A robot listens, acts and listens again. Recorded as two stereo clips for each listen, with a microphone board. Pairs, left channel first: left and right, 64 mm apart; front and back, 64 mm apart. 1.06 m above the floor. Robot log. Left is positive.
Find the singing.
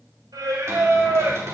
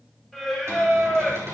note: The singing: 95° right.
cmd yaw -95
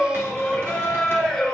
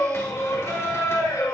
end: Facing the singing, over 4 m away.